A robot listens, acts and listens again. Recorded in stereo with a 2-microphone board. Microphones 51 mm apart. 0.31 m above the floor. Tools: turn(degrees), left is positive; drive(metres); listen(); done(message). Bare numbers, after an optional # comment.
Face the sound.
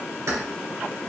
turn(-90)
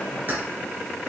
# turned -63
# So it is at 40° right.
turn(-40)
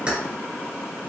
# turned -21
# The keys jangling is now 20° right.
turn(-20)
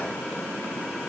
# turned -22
listen()
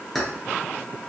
done("Found it: keys jangling, straight ahead.")